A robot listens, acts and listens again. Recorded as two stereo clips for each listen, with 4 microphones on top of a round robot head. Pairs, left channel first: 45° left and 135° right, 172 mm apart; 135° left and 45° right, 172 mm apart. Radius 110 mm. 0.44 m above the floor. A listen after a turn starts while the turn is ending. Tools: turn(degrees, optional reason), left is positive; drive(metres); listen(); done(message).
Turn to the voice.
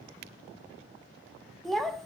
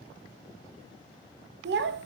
turn(degrees=-45, reason="The child speaking: 45° right.")
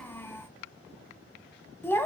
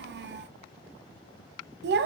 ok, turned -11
turn(degrees=-35, reason="The child speaking is now 35° right.")
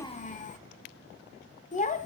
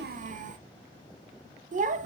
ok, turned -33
done("Found it: a child speaking, straight ahead.")